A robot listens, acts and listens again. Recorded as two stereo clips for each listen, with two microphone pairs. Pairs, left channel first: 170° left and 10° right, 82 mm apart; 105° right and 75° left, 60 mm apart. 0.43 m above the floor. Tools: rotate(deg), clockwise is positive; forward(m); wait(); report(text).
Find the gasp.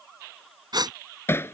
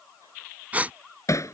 rotate(-10)
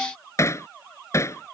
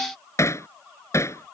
report("I heard a gasp from this way, but can't make it out now.")